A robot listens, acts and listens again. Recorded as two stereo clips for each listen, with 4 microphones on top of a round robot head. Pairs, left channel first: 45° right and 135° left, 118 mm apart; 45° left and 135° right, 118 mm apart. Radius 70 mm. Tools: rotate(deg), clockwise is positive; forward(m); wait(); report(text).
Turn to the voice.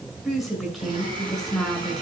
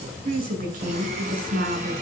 rotate(140)
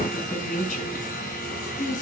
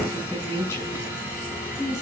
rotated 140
rotate(25)
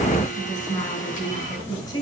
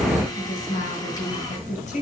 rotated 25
rotate(-15)
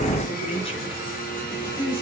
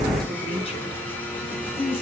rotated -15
report("Found it: a woman speaking, straight ahead.")